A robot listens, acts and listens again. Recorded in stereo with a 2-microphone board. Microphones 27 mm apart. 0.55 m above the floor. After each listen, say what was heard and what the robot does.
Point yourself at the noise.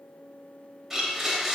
Turn 30° right.
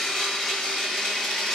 So it is at 25° left. Turn 25° left.
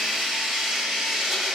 Facing the blender.